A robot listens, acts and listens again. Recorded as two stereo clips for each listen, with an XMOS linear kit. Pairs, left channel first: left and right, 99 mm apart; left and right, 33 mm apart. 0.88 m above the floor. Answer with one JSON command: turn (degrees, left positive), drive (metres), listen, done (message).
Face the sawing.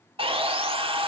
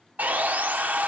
{"turn": -65}
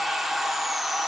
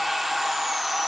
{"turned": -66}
{"done": "Found it: sawing, straight ahead, 1 to 2 m away."}